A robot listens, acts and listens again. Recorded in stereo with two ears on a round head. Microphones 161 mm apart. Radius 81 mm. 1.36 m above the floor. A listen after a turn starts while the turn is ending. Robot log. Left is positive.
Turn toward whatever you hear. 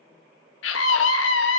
cmd yaw +90
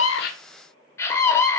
note: So it is at 15° left.
cmd yaw +15
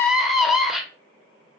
end: Found it: a scream, straight ahead, under 1 m away.